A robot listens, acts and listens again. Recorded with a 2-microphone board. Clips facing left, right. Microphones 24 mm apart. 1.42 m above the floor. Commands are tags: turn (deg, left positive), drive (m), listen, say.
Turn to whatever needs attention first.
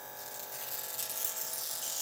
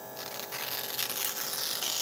<listen/>
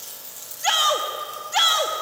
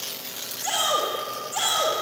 <turn deg="50"/>
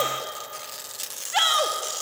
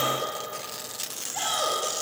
<turn deg="80"/>
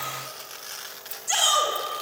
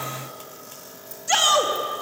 <turn deg="-20"/>
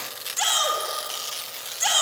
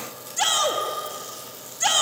<say>Found it: a shout, straight ahead.</say>